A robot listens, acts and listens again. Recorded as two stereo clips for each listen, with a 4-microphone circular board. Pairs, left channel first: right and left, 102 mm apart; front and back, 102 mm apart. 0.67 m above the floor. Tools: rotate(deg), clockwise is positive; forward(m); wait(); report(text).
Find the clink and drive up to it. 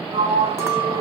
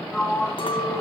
rotate(-25)
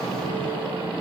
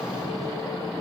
wait()
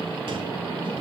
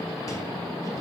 wait()
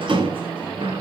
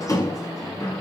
report("I heard a clink from this way, but can't make it out now. I did not reach it.")